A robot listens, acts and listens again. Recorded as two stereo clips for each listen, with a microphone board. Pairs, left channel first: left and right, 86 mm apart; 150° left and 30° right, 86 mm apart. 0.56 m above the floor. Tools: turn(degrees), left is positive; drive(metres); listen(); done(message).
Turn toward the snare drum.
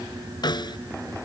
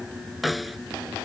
turn(degrees=60)
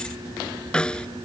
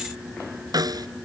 turn(degrees=10)
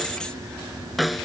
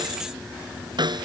done("Facing the snare drum.")